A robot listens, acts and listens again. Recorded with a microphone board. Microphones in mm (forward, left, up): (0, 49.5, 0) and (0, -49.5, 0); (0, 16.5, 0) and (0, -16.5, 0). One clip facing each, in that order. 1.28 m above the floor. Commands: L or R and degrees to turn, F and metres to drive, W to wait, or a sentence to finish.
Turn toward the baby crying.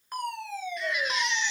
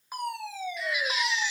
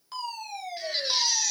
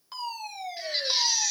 R30
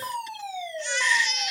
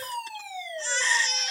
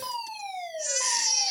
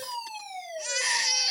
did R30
R145
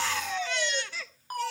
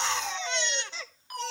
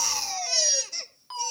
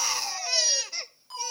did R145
R25
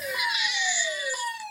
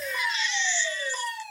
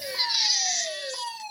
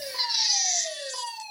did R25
L15
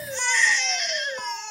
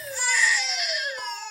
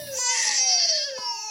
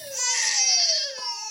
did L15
Facing the baby crying, 1 to 2 m away.